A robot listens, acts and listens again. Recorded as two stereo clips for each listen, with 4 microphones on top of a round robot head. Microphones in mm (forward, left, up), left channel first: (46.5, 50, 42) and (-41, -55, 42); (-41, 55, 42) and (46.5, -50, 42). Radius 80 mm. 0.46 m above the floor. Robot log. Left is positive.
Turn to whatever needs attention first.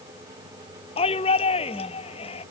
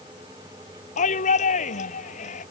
note: The shout: 95° left.
cmd yaw +95
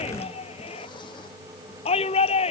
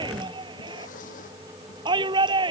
end: Facing the shout.